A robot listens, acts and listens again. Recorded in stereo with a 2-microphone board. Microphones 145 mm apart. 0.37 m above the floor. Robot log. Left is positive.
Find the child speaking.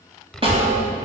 cmd yaw +30
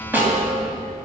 note: So it is at 145° left.
cmd yaw +145
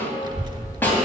note: The child speaking is now 35° right.
cmd yaw -35
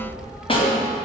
end: Facing the child speaking.